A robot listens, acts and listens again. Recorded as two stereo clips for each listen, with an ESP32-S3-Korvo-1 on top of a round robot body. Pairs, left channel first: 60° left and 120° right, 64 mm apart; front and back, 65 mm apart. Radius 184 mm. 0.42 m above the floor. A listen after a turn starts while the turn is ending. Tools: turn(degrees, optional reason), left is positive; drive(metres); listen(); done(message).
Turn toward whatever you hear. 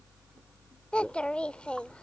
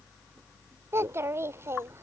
turn(degrees=135, reason="The child speaking: 135° left.")
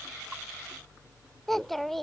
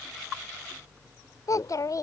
turn(degrees=-25, reason="The child speaking is now 25° right.")
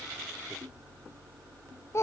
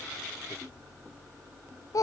turn(degrees=20, reason="The child speaking is now 20° left.")
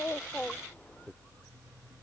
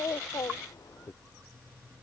done("Found it: a child speaking, straight ahead.")